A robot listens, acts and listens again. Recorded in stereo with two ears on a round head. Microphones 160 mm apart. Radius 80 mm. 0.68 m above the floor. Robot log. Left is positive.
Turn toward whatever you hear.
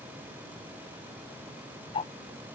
note: The ticking: about 30° left or 150° left.
cmd yaw +30
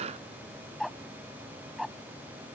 end: Found it: ticking, straight ahead.